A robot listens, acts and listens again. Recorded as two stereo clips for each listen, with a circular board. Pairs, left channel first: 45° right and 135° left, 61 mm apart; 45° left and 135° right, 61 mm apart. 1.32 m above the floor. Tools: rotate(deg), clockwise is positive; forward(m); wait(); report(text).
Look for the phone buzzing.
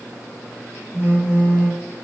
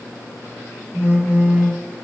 rotate(-160)
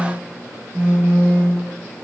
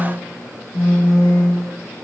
rotate(-65)
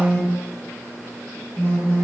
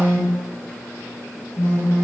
rotate(-20)
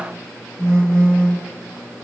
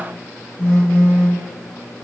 report("Facing the phone buzzing, 1 to 2 m away.")